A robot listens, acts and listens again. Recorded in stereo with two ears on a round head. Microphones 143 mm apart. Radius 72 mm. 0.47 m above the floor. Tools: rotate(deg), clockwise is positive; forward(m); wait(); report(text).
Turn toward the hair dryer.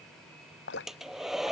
rotate(-30)
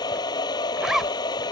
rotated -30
rotate(-155)
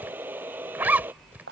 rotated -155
rotate(10)
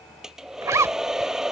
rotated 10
report("Facing the hair dryer.")